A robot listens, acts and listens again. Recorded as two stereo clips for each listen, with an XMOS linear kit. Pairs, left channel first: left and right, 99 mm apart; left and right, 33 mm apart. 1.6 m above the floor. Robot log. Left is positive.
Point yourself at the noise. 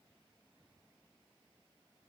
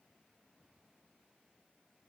cmd idle
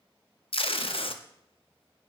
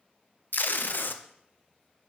note: The tape being pulled: about 70° left or 110° left.
cmd yaw +70
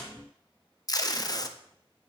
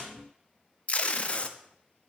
note: So it is at 40° left.
cmd yaw +40
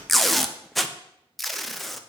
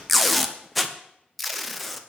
end: Found it: tape being pulled, straight ahead.